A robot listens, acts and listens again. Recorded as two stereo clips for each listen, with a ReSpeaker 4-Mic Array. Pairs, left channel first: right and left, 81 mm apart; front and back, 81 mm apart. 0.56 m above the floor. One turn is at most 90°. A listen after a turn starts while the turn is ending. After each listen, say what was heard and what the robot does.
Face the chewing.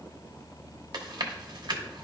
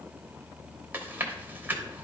The chewing: 115° left. Turn 90° left.
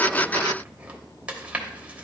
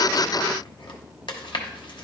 The chewing is now 15° left. Turn 15° left.
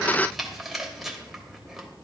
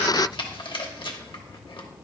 Found it: chewing, straight ahead, 1 to 2 m away.